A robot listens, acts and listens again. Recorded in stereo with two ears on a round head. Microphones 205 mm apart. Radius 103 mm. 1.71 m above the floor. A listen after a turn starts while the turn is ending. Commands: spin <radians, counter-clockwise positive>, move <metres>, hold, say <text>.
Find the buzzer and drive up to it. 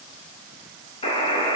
spin 0.44
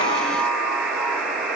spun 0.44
move 1.0
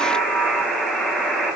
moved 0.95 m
move 1.0
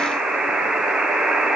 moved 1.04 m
move 1.0
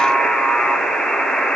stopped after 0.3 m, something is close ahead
say I am next to the buzzer.